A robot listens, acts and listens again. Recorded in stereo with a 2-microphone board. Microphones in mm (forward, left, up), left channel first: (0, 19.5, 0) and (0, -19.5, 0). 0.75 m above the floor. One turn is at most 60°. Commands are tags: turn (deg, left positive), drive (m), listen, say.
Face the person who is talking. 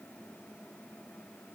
<listen/>
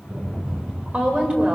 <turn deg="-30"/>
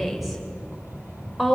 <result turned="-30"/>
<say>Found it: a woman speaking, straight ahead.</say>